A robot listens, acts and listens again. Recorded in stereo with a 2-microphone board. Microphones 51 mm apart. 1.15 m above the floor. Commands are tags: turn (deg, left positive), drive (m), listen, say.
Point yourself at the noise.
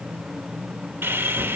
<turn deg="-45"/>
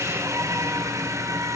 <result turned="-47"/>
<turn deg="-85"/>
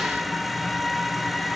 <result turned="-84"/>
<say>Facing the sawing, 1 to 2 m away.</say>